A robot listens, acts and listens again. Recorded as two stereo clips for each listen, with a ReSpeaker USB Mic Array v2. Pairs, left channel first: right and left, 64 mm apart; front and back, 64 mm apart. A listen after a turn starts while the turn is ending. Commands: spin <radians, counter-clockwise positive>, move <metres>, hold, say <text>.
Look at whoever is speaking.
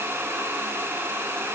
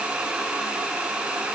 hold
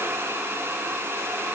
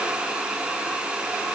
hold
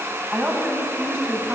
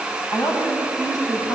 spin 0.44
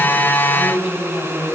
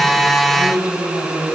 say Found it: a woman speaking, straight ahead.